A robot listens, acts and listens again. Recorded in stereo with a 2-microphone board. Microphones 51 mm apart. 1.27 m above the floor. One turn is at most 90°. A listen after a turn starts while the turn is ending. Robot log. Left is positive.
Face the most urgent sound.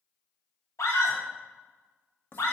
cmd yaw +90
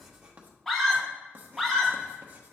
end: Facing the scream.